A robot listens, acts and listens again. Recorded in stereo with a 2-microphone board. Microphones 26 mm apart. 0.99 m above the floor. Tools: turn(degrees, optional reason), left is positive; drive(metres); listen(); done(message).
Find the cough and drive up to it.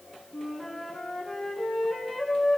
listen()
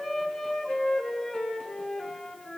listen()
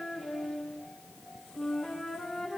done("I can't make out a cough to turn to.")